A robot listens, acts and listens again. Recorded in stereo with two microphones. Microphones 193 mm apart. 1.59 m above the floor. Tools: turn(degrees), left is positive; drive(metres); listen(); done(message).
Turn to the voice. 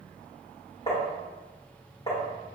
listen()
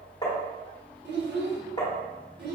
turn(degrees=-60)
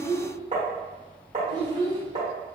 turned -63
turn(degrees=-30)
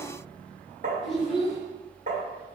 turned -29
done("Facing the child speaking.")